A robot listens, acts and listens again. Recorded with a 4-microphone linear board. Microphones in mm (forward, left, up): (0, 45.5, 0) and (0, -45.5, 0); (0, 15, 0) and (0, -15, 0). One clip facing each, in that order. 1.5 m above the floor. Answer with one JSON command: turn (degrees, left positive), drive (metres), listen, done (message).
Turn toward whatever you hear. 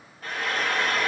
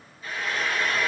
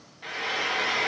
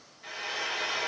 {"turn": 60}
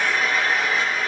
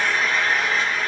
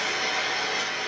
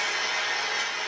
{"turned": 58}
{"done": "Found it: frying, straight ahead, 1 to 2 m away."}